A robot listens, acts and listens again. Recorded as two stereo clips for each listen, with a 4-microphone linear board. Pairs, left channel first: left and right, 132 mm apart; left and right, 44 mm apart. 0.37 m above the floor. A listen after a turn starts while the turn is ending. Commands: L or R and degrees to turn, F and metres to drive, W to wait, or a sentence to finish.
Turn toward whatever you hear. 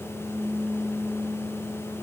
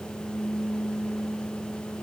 W
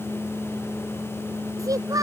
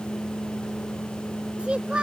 R25
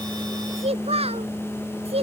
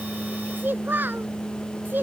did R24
R130
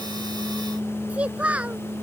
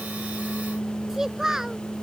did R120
R10
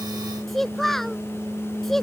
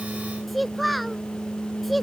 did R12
Found it: a child speaking, straight ahead.